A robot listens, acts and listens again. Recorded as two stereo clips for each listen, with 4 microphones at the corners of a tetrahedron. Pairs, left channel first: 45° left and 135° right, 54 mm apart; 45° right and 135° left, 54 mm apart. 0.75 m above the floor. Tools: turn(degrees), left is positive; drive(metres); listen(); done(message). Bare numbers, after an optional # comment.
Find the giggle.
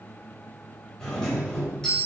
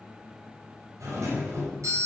listen()
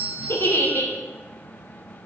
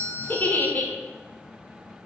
# The giggle: 10° left.
turn(10)
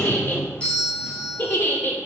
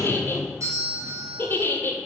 done("Facing the giggle.")